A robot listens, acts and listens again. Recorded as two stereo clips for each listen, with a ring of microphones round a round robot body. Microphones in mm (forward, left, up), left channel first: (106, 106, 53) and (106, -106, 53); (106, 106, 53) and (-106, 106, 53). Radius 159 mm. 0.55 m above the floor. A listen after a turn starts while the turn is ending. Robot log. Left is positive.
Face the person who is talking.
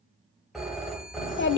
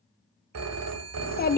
note: The child speaking: 50° left.
cmd yaw +50
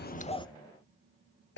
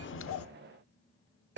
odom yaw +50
cmd idle
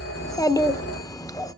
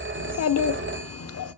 note: The child speaking is now 15° left.
cmd yaw +15
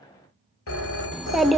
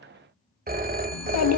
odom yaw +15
end: Found it: a child speaking, straight ahead, under 1 m away.